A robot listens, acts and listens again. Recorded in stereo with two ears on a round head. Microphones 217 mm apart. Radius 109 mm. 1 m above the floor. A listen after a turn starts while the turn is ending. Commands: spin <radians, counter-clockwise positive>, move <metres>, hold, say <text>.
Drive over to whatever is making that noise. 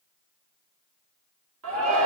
spin -1.13
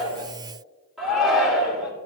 move 1.0
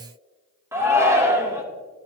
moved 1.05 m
spin -0.17
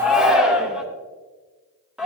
move 1.0
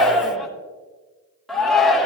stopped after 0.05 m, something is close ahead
say I am next to the shout.